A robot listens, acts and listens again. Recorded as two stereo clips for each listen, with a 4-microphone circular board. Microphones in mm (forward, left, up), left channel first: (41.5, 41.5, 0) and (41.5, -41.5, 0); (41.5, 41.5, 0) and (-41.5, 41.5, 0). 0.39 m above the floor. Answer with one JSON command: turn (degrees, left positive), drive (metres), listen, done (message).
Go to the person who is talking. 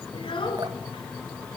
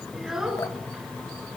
{"turn": 95}
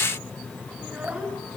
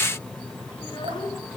{"turn": -15}
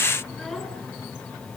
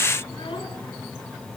{"listen": true}
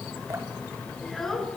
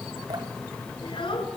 {"drive": 1.0}
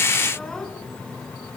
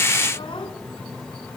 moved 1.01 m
{"drive": 1.0}
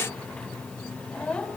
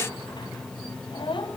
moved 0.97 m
{"turn": 10}
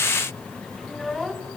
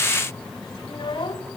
{"drive": 1.0}
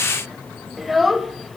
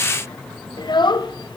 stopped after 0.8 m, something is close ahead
{"done": "Arrived at the child speaking, straight ahead."}